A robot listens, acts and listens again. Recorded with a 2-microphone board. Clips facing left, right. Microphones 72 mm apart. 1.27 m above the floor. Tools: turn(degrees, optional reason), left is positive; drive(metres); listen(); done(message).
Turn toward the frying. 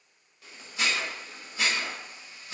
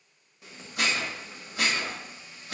turn(degrees=-20, reason="The frying: about 20° right or 160° right.")
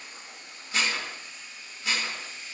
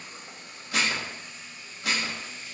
turn(degrees=-135, reason="So it is at 135° right.")
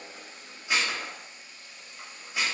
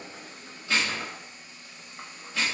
turn(degrees=-35, reason="The frying is now 35° right.")
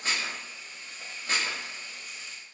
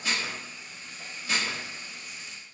done("Facing the frying, 1 to 2 m away.")